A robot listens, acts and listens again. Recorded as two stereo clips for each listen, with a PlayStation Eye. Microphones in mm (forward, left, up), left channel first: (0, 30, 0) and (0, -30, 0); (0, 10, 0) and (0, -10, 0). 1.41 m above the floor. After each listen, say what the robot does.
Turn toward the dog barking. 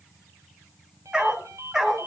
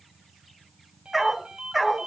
Turn 30° right.
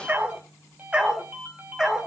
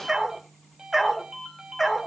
Turn 30° right.
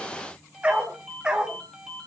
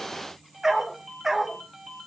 Turn 30° right.
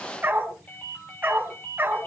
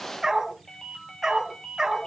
Turn 145° right.
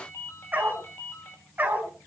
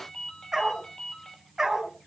Turn 30° right.
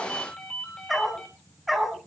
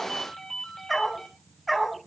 Found it: a dog barking, straight ahead.